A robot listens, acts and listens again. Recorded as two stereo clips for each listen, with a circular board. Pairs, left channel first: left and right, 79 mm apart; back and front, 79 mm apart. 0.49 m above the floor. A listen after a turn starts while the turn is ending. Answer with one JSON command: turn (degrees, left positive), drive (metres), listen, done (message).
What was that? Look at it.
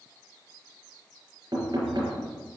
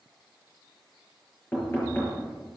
{"turn": -115}
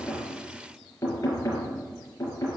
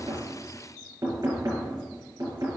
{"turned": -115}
{"turn": 40}
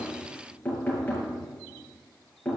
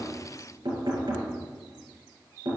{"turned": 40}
{"turn": 20}
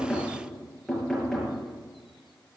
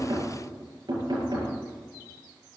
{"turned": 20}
{"done": "Facing the knocking."}